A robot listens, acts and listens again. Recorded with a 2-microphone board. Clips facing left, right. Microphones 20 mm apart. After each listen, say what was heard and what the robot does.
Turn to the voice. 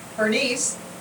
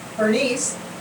The woman speaking: about 65° left or 115° left. Turn 65° left.
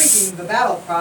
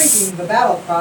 So it is at 15° left. Turn 15° left.
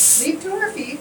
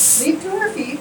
Found it: a woman speaking, straight ahead, 1 to 2 m away.